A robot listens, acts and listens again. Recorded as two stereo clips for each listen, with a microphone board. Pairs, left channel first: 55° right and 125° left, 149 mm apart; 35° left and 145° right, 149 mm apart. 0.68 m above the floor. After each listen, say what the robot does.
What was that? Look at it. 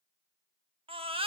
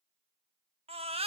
Turn 170° left.
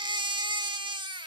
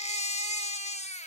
Turn 70° left.
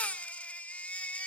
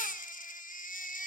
Turn 25° left.
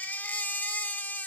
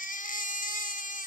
Turn 20° left.
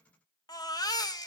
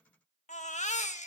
Facing the baby crying, under 1 m away.